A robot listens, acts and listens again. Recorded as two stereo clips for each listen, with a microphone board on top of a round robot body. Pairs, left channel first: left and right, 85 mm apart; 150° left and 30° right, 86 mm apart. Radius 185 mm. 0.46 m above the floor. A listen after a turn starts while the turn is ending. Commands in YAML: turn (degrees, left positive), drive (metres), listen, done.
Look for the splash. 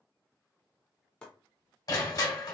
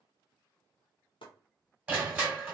listen: true
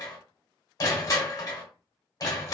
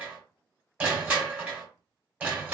listen: true
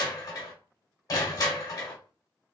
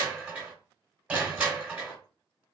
done: "I can't make out a splash, only chopping and crushing."